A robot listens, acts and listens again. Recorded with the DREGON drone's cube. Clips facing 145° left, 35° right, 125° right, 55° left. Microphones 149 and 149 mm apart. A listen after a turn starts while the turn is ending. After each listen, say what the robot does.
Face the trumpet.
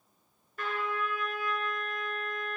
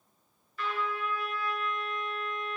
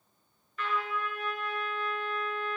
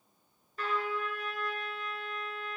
Turn 105° left.
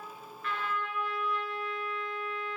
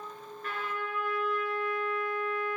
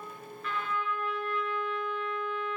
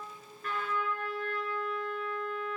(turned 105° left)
Found it: a trumpet, straight ahead, 1 to 2 m away.